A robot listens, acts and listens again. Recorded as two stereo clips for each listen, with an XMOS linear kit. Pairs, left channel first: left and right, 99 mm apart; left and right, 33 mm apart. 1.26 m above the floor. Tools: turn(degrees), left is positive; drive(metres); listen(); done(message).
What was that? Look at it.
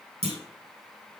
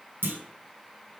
turn(degrees=-90)
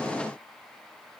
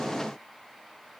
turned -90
done("Facing where the clunk came from. I can't hear it now.")